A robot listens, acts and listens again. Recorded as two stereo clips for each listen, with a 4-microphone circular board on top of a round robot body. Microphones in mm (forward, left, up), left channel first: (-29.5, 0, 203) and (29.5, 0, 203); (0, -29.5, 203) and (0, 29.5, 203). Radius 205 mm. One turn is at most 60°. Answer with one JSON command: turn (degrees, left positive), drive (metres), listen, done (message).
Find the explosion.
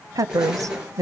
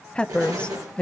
{"turn": 60}
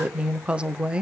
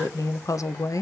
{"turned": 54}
{"turn": 25}
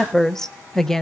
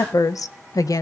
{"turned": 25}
{"done": "I heard an explosion from this way, but can't make it out now."}